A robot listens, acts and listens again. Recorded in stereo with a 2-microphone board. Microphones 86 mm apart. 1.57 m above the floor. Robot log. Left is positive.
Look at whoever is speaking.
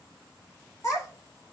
note: The child speaking: about 40° left or 140° left.
cmd yaw +40
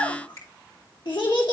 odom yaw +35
note: So it is at 100° left.
cmd yaw +100
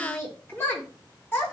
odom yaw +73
note: The child speaking is now 30° left.
cmd yaw +30
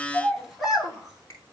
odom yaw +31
end: Found it: a child speaking, straight ahead, 1 to 2 m away.